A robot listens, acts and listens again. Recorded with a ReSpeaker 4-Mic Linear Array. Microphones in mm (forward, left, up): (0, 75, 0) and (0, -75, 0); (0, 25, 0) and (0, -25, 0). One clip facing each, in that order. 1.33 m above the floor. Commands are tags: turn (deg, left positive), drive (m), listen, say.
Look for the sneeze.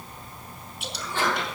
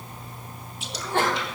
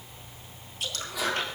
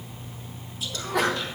<turn deg="-70"/>
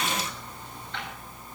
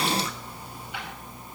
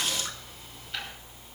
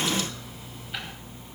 <listen/>
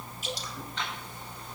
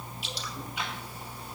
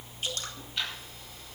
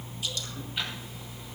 <say>I heard a sneeze, but can't make it out now. It was about straight ahead or 40° right.</say>